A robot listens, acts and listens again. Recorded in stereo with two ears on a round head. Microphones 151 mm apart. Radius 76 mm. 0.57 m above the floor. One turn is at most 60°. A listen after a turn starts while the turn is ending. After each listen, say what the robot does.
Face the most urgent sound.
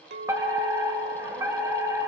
Turn 20° right.
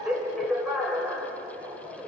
Facing the fire alarm, 2 to 4 m away.